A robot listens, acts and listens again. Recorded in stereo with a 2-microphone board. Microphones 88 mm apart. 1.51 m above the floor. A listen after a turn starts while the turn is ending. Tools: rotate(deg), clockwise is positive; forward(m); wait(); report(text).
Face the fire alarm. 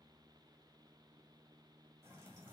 wait()
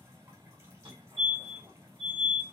rotate(90)
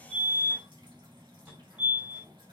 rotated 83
rotate(20)
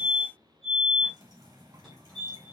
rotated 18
report("Facing the fire alarm.")